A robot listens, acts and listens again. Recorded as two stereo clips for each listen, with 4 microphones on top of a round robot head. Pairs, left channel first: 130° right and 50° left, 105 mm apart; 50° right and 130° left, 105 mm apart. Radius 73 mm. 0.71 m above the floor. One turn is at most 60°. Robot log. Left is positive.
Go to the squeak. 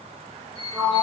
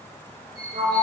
note: The squeak: 175° right.
cmd yaw -60
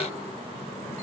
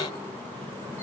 note: Nothing new. It was at 115° right.
cmd yaw -60
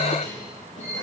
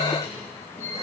note: The squeak is now 55° right.
cmd yaw -55
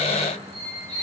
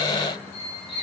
cmd fwd 1.0
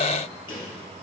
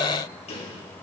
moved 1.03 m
cmd idle
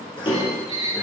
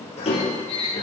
cmd fwd 1.0
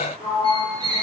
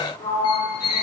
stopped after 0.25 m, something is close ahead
end: Arrived at the squeak, straight ahead.